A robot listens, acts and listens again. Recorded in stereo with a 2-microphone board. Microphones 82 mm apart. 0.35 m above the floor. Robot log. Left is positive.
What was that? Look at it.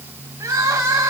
note: The crying: about 40° right or 140° right.
cmd yaw -40
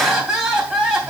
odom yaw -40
end: Found it: crying, straight ahead.